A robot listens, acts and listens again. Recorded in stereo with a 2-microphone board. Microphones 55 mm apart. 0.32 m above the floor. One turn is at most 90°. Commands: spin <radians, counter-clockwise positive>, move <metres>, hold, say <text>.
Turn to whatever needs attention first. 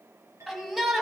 spin -0.52
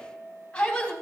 spin 0.44
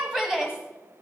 spin -0.26
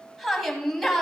say Found it: a shout, straight ahead, 2 to 4 m away.